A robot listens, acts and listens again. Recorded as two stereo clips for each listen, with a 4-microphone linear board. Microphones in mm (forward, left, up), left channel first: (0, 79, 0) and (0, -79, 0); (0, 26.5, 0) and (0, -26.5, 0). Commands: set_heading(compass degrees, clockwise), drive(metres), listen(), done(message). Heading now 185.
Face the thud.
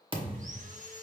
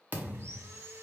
set_heading(220)
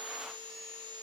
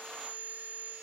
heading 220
listen()
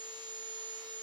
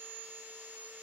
done("I heard a thud, but can't make it out now. It was about straight ahead or 110° right.")